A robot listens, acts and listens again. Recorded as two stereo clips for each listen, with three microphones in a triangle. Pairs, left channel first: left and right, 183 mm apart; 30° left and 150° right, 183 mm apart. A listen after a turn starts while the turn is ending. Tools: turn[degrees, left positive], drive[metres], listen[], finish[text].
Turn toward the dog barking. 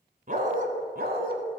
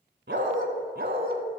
Thought: The dog barking: 120° right.
Action: turn[-120]
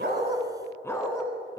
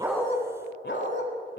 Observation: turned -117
Thought: The dog barking is now 25° left.
Action: turn[25]
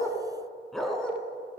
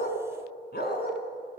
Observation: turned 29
Action: finish[Found it: a dog barking, straight ahead.]